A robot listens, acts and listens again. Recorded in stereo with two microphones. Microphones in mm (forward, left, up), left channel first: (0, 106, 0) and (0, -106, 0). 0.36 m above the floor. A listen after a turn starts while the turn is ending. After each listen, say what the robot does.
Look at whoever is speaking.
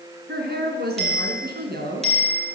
Turn 50° right.
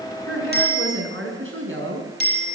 Turn 75° right.
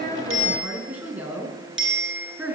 Found it: a woman speaking, straight ahead, 2 to 4 m away.